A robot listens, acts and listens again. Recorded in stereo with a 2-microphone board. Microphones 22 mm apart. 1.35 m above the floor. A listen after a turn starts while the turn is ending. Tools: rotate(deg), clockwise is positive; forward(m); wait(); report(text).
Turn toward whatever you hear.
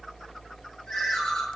rotate(-35)
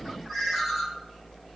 report("Facing the ringtone.")